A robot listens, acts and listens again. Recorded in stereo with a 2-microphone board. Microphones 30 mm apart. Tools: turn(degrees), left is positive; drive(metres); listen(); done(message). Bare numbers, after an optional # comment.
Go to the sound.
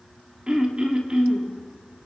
# The throat clearing: about 30° right or 150° right.
turn(-30)
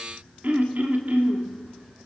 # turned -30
# So it is at 115° right.
turn(-115)
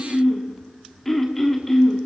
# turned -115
# The throat clearing is now 10° left.
turn(10)
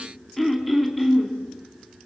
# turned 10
drive(1.0)
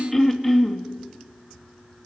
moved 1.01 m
# The throat clearing is now 10° left.
turn(10)
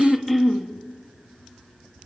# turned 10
drive(1.0)
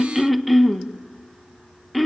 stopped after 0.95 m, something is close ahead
done("I am next to the throat clearing.")